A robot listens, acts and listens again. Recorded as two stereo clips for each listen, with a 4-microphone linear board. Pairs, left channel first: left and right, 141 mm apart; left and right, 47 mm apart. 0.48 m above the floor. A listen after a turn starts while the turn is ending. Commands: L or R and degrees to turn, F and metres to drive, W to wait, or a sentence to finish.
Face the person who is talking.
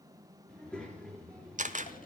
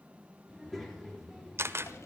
L30
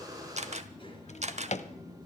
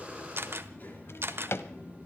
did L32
L140
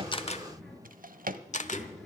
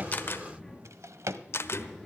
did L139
Facing the child speaking, over 4 m away.